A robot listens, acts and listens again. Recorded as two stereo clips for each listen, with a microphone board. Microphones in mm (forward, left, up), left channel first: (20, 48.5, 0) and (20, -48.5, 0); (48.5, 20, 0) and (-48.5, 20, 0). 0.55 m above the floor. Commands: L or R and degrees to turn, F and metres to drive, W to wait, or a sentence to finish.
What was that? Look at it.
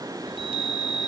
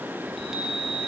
R95
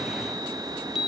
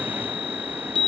Found it: a chime, straight ahead.